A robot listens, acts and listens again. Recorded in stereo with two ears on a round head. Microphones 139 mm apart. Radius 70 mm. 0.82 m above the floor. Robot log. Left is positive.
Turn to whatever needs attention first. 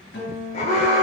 note: The alarm: about 40° left or 140° left.
cmd yaw +40
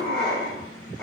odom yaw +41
end: Found it: an alarm, straight ahead, 2 to 4 m away.